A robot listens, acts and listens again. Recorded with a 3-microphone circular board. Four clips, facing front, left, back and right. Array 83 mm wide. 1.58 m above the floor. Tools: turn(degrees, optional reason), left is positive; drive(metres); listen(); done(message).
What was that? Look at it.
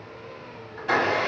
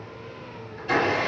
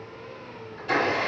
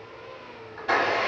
turn(degrees=-50, reason="The blender: 50° right.")
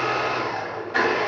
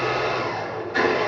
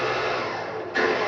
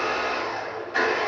done("Found it: a blender, straight ahead, 1 to 2 m away.")